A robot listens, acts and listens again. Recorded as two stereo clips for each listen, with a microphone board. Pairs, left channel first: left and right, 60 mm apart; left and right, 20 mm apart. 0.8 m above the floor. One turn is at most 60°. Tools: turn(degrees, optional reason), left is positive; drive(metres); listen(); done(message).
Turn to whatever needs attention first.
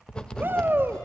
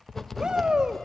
turn(degrees=-35, reason="The shout: about 35° right or 145° right.")
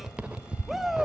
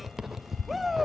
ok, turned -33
done("Facing the shout, 1 to 2 m away.")